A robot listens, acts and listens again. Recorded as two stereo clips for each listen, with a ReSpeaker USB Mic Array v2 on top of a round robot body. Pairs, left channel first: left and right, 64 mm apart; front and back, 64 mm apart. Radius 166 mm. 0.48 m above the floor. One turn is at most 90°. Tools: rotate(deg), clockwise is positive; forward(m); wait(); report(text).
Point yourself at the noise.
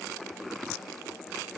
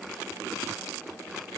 wait()
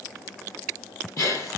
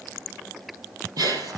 rotate(-90)
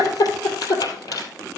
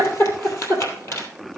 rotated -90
rotate(-50)
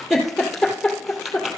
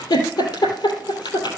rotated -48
report("Found it: a giggle, straight ahead.")